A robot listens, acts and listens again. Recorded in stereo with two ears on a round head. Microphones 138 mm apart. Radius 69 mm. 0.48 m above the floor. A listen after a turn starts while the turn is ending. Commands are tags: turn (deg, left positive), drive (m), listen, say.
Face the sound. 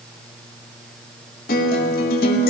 <turn deg="65"/>
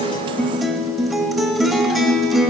<say>Facing the guitar, 1 to 2 m away.</say>